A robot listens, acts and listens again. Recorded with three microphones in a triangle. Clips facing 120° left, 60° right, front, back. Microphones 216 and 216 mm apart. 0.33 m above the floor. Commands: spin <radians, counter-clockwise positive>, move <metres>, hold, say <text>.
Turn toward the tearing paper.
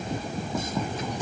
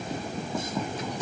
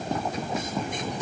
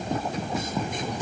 hold
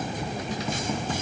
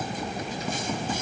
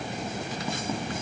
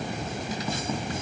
hold
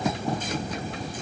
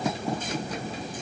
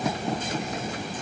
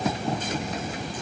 say I can't make out tearing paper.